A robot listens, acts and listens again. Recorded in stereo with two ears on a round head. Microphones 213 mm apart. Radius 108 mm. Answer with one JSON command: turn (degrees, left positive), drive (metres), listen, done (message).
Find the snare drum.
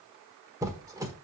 {"listen": true}
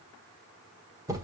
{"listen": true}
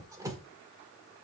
{"done": "I can't make out a snare drum, only a squeak."}